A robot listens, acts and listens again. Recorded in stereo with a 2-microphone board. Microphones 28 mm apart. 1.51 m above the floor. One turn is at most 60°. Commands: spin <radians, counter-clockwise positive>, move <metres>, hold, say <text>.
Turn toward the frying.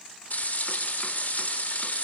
spin 1.05
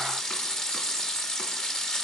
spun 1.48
spin 0.52
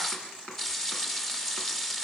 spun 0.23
spin 0.26
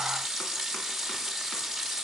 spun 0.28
say Found it: frying, straight ahead, 2 to 4 m away.